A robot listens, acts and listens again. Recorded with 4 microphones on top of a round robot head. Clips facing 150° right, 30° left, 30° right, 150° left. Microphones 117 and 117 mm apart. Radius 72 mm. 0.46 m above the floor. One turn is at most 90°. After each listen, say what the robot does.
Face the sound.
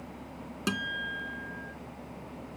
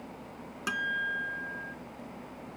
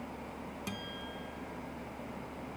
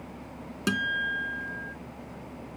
Turn 90° left.
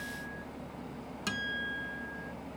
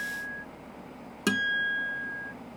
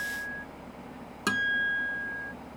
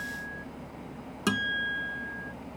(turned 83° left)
Turn 65° left.
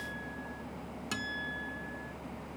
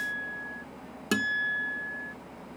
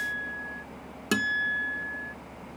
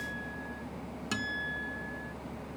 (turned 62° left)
Facing the guitar.